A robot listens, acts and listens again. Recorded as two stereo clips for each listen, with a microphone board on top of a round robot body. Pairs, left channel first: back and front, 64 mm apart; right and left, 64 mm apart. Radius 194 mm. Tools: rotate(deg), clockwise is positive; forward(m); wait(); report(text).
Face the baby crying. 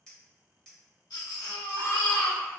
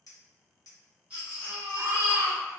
rotate(-160)
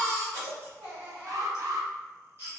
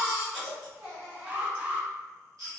rotate(-55)
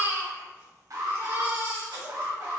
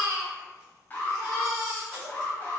report("Found it: a baby crying, straight ahead, 1 to 2 m away.")